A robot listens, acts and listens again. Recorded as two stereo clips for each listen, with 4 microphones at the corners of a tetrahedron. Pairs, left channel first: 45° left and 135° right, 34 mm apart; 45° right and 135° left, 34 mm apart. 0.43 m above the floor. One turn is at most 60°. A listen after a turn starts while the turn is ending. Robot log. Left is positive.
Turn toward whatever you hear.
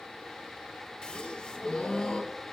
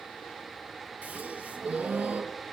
note: The gasp: 110° left.
cmd yaw +60
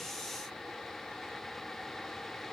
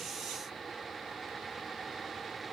note: Nothing new. It was at 50° left.
cmd yaw +50
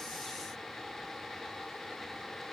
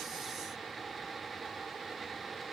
end: I heard a gasp from this way, but can't make it out now.